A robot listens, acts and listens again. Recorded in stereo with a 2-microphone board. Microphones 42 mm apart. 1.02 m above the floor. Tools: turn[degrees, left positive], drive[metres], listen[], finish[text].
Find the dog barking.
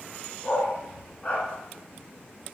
Thought: The dog barking: about 25° left or 155° left.
Action: turn[25]
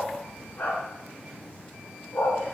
Thought: So it is at 130° left.
Action: turn[130]
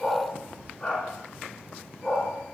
Thought: The dog barking is now 20° left.
Action: turn[20]
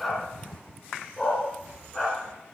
Thought: The dog barking is now 10° left.
Action: turn[10]
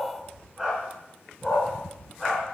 Action: finish[Facing the dog barking, over 4 m away.]